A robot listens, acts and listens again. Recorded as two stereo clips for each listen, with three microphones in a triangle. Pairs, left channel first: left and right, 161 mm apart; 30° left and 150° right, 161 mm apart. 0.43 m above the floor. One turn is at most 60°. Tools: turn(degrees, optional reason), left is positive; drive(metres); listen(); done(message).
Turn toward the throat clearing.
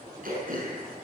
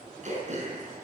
turn(degrees=-60, reason="The throat clearing: 110° right.")
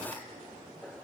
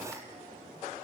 turn(degrees=-50, reason="Nothing new. It was at 50° right.")
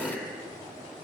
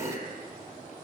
done("Found it: throat clearing, straight ahead.")